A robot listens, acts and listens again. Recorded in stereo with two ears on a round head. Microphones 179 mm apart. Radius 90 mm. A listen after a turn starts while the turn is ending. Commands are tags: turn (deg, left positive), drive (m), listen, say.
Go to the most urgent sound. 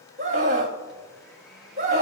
<turn deg="-35"/>
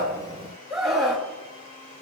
<drive m="1.0"/>
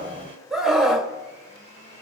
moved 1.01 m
<drive m="1.0"/>
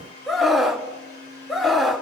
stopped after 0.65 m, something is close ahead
<say>Arrived at the scream, straight ahead.</say>